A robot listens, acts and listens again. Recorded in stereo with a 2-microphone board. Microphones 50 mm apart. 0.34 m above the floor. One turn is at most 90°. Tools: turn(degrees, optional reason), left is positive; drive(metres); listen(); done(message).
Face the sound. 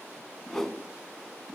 turn(degrees=30)
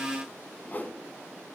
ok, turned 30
turn(degrees=90, reason="So it is at 140° left.")
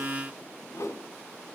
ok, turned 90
turn(degrees=90, reason="The whoosh is now 90° left.")
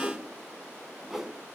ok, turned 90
done("Facing the whoosh, under 1 m away.")